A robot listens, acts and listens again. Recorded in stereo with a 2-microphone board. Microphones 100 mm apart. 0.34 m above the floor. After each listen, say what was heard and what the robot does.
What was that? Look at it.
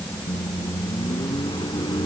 The microwave: about 45° left or 135° left. Turn 45° left.
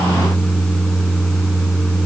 Facing the microwave.